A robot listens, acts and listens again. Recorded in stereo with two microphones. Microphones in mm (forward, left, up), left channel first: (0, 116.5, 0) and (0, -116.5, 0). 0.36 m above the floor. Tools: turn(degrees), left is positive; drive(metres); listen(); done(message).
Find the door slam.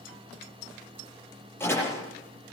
turn(degrees=30)
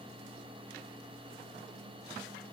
listen()
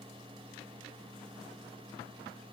done("I heard a door slam, but can't make it out now. It was about 20° right or 140° left.")